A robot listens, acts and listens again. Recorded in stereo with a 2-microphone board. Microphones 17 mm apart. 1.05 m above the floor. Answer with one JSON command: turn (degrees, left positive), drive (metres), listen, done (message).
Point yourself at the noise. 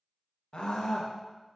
{"turn": 60}
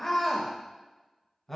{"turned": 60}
{"turn": 20}
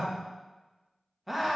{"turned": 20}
{"done": "Found it: a scream, straight ahead."}